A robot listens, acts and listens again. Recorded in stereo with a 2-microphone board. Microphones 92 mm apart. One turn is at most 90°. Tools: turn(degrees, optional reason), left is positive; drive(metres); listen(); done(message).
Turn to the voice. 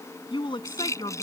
turn(degrees=55, reason="The woman speaking: about 55° left or 125° left.")
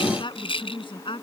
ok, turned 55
turn(degrees=65, reason="So it is at 65° left.")
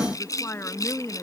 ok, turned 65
turn(degrees=30, reason="The woman speaking is now 30° left.")
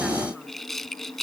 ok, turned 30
listen()
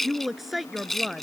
done("Facing the woman speaking.")